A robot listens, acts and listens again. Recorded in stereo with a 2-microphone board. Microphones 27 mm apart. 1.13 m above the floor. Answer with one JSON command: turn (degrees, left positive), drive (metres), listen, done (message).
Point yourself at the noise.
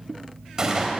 {"turn": -25}
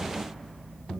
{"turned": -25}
{"listen": true}
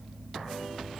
{"done": "I heard a gunshot, but can't make it out now. It was about straight ahead or 130° right."}